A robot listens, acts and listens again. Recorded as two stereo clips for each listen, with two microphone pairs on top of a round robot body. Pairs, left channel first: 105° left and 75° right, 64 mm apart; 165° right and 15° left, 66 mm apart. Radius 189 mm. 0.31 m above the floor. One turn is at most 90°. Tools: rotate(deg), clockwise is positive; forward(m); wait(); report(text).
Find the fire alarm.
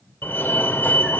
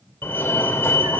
rotate(-90)
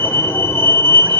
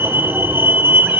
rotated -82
rotate(-70)
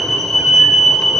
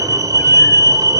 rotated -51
rotate(-20)
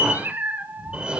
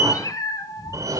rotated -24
report("Facing the fire alarm.")